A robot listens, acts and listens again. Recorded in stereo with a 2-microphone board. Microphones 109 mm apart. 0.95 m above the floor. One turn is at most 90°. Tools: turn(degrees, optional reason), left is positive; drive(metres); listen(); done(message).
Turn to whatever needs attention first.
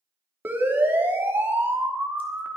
turn(degrees=-20, reason="The siren: about 20° right or 160° right.")
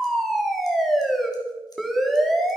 done("Facing the siren, 2 to 4 m away.")